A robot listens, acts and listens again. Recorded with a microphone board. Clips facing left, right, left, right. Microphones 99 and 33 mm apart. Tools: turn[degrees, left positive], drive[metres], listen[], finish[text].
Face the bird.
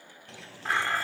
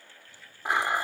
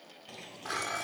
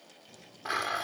Action: turn[90]
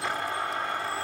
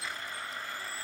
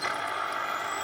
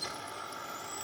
Action: listen[]
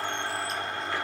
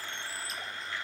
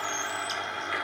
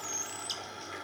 Action: listen[]
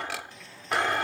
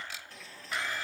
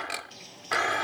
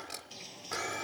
Action: finish[Facing the bird.]